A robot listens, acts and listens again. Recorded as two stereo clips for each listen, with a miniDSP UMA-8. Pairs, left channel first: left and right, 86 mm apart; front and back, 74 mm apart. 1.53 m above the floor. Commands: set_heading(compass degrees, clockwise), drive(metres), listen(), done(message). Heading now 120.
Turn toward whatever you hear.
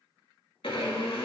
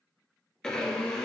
set_heading(45)
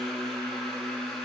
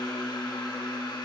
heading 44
done("Facing the blender.")